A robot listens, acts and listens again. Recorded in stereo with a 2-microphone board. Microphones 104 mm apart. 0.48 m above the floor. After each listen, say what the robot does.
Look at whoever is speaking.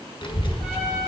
Turn 50° left.
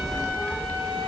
Turn 15° left.
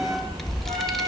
Facing the child speaking, under 1 m away.